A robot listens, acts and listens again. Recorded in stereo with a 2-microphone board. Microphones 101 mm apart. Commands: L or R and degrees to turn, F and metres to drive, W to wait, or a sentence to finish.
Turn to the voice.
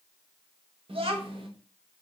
R65
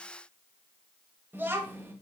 R20
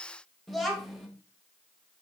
Found it: a child speaking, straight ahead, 1 to 2 m away.